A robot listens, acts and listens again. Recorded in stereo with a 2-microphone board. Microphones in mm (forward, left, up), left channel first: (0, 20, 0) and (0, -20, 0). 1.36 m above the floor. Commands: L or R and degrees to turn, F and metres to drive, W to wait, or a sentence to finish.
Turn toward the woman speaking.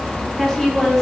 R30
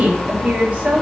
R135
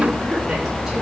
W
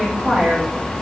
R10
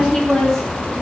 Found it: a woman speaking, straight ahead.